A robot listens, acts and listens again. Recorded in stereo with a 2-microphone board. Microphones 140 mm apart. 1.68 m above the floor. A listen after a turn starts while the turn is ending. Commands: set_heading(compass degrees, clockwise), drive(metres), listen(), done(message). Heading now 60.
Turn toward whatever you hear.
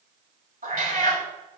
set_heading(130)
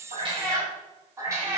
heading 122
set_heading(142)
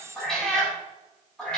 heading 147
done("Facing the cat meowing, over 4 m away.")